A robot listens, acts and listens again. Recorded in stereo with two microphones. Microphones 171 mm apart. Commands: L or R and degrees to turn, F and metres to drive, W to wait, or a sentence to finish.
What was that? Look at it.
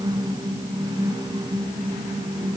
W
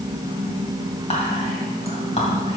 L40
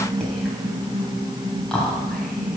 Facing the whispering.